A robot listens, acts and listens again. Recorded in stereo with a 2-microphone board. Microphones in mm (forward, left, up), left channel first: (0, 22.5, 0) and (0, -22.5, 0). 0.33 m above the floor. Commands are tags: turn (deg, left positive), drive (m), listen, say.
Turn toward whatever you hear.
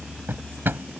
<turn deg="-55"/>
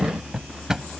<turn deg="-15"/>
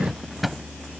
<say>Found it: a drawer, straight ahead.</say>